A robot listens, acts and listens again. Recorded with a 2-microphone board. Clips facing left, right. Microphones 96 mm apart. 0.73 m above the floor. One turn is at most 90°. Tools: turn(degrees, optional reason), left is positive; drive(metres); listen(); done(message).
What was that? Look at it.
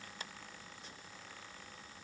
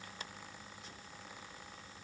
listen()
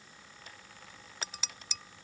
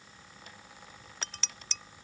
turn(degrees=30)
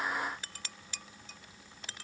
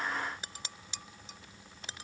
turn(degrees=-20, reason="So it is at 20° right.")
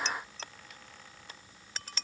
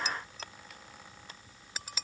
done("Facing the dishes clattering.")